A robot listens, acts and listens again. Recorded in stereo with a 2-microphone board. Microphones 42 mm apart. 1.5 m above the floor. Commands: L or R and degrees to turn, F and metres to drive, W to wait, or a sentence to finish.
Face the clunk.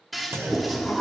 R90
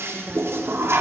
Facing where the clunk came from. I can't hear it now.